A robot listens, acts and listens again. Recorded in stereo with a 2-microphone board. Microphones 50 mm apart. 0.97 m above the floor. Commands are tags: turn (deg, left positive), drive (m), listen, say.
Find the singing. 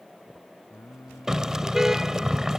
<turn deg="90"/>
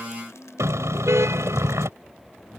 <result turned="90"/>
<turn deg="-15"/>
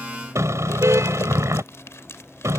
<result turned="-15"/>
<listen/>
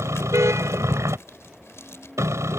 <listen/>
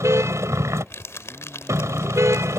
<say>Facing where the singing came from. I can't hear it now.</say>